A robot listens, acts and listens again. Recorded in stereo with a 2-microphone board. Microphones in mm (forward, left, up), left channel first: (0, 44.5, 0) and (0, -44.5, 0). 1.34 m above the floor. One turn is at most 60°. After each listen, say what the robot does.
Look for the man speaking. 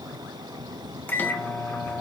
Keep listening.
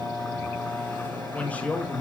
Turn 20° left.
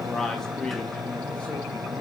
Turn 30° left.
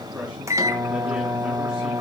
Keep listening.
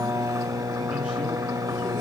Keep listening.
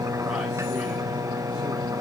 I heard a man speaking, but can't make it out now. It was about 20° right or 140° left.